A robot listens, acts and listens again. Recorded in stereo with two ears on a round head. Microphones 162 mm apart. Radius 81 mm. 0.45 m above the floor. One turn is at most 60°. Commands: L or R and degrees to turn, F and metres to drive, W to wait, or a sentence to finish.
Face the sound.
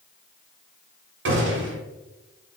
R60
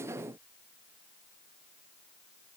W
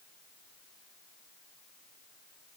I heard a gunshot, but can't make it out now. It was about 10° right or 50° right.